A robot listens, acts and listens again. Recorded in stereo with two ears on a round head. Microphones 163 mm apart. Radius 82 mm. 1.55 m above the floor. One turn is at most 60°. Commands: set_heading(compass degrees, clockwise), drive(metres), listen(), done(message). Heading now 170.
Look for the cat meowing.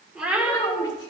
set_heading(200)
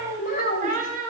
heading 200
set_heading(260)
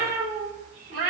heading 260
set_heading(310)
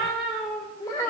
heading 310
done("Found it: a cat meowing, straight ahead.")